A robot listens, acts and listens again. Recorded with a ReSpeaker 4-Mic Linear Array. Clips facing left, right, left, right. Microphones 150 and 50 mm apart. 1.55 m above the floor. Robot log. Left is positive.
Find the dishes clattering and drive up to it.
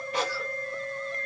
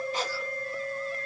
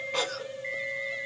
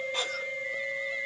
cmd idle
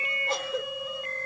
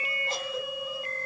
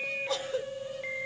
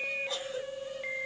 cmd idle
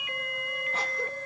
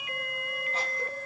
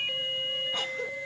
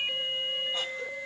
end: I can't make out dishes clattering, only a cough.